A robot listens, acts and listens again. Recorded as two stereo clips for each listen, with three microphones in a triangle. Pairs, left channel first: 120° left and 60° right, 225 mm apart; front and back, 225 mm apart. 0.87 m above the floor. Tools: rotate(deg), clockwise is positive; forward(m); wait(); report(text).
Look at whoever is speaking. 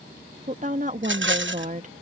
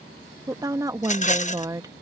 rotate(105)
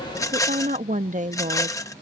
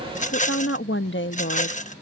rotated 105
rotate(10)
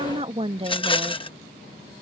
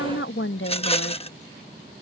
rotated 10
report("Facing the woman speaking.")